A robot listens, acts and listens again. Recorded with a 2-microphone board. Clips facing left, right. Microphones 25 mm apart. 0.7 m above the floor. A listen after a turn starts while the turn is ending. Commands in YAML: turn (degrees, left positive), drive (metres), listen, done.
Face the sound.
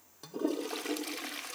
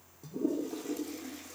turn: 90
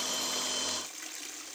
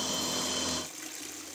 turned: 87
done: "Facing the toilet flushing, under 1 m away."